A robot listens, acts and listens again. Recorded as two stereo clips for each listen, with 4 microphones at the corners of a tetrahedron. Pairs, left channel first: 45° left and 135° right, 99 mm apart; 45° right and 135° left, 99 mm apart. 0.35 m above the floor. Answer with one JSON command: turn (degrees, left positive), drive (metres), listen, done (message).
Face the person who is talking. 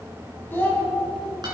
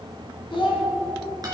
{"turn": -20}
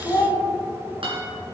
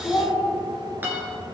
{"done": "Found it: a child speaking, straight ahead, 2 to 4 m away."}